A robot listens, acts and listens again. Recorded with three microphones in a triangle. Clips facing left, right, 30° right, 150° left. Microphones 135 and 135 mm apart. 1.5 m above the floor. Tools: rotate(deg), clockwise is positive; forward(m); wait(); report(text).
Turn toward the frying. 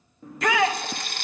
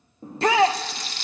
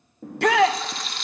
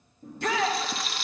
rotate(-60)
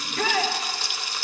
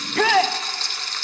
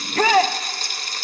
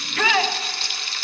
rotate(-10)
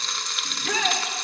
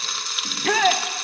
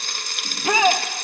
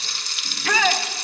report("Found it: frying, straight ahead.")